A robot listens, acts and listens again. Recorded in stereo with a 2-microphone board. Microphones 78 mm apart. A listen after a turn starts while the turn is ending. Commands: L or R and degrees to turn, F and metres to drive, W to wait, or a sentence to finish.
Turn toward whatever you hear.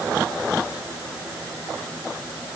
W
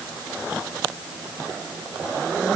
W
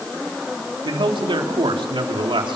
R90
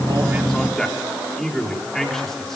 Facing the man speaking, over 4 m away.